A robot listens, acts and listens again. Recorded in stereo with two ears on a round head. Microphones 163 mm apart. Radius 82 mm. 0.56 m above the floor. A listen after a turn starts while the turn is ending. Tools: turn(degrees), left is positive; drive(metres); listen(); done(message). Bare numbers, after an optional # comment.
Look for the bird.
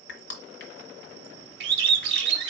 # The bird: about 70° right or 110° right.
turn(-70)
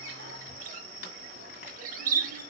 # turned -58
# So it is at 50° right.
turn(-50)
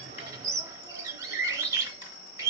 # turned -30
# The bird is now 20° right.
turn(-20)
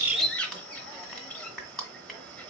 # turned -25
# The bird is now 10° left.
turn(10)
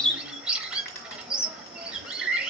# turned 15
done("Facing the bird.")